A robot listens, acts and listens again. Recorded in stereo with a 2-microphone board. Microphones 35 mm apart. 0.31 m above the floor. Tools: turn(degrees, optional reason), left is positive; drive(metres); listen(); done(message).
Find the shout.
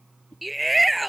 turn(degrees=30)
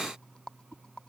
listen()
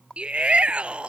turn(degrees=-30, reason="So it is at 30° right.")
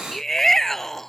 turn(degrees=10, reason="The shout is now 10° left.")
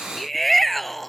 done("Found it: a shout, straight ahead.")